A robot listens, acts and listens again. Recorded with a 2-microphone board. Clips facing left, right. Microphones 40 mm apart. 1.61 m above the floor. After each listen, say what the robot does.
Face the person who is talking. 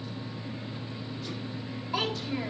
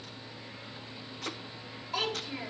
Turn 30° left.
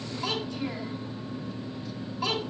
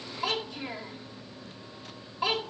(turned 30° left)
Turn 20° right.
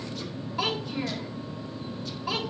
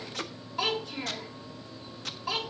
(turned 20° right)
Found it: a child speaking, straight ahead, 2 to 4 m away.